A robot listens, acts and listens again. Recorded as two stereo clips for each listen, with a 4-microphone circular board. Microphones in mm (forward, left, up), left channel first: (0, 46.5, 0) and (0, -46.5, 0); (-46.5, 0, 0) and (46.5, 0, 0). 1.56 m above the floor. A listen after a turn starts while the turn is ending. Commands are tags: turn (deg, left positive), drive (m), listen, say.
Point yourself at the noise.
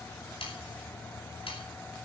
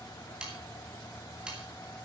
<turn deg="80"/>
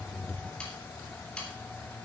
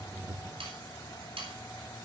<turn deg="10"/>
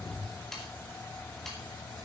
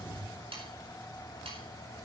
<say>Found it: sawing, straight ahead, over 4 m away.</say>